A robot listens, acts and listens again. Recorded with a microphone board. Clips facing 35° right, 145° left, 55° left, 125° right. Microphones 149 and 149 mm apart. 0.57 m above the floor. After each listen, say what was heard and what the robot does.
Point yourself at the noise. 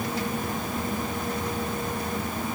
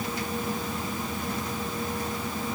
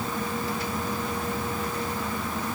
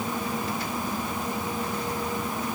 Keep listening.
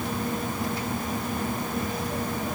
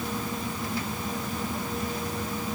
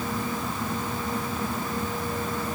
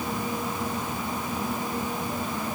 Keep listening.
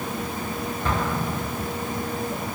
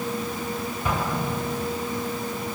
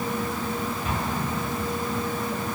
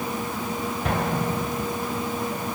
The explosion: 135° right. Turn 135° right.
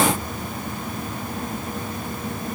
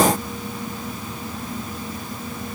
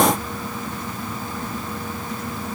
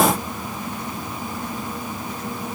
I heard an explosion from this way, but can't make it out now.